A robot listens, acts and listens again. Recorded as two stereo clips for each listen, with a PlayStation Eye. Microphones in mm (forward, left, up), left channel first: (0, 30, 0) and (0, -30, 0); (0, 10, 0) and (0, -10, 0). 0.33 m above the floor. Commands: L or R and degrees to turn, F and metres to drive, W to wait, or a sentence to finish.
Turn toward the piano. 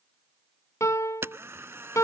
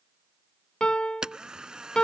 L65
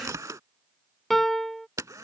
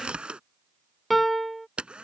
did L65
Found it: a piano, straight ahead.